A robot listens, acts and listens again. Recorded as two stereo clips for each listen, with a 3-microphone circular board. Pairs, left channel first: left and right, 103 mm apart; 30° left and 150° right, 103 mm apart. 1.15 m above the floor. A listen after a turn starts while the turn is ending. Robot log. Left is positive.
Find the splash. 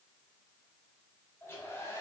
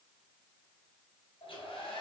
cmd idle
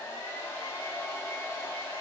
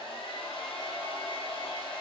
cmd idle
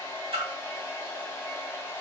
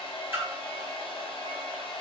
note: The splash: 80° right.
cmd yaw -80
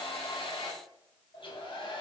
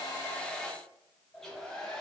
end: I heard a splash from this way, but can't make it out now.